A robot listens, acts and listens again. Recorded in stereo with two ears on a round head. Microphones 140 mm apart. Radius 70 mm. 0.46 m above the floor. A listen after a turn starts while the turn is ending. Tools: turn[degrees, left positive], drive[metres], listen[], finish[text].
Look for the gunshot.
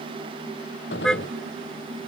Action: turn[90]
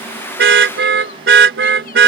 Action: finish[I heard a gunshot from this way, but can't make it out now.]